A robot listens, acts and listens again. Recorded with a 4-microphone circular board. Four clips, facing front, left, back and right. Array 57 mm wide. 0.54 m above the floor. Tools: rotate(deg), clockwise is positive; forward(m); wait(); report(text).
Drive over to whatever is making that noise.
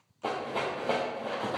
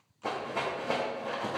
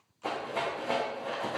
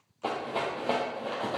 rotate(60)
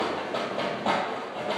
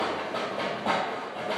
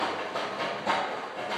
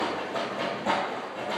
rotate(-20)
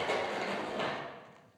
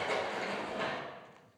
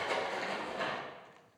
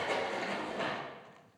forward(1.0)
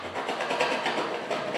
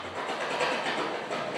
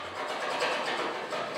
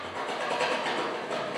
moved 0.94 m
forward(1.0)
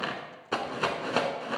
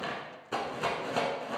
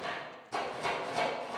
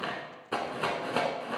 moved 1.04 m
rotate(20)
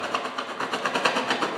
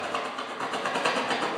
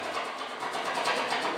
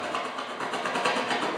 forward(1.0)
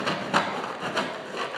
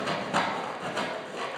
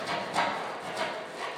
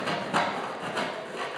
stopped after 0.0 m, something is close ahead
rotate(10)
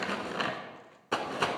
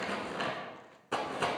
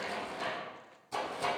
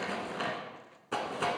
report("I am next to the rattle.")